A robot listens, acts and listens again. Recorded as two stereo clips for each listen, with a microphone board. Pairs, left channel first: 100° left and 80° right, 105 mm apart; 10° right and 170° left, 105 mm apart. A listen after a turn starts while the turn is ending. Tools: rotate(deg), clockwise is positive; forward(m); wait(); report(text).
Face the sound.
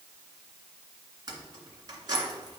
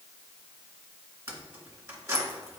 rotate(130)
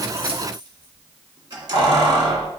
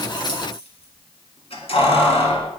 rotate(40)
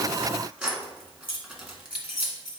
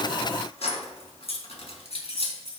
report("Found it: keys jangling, straight ahead, 1 to 2 m away.")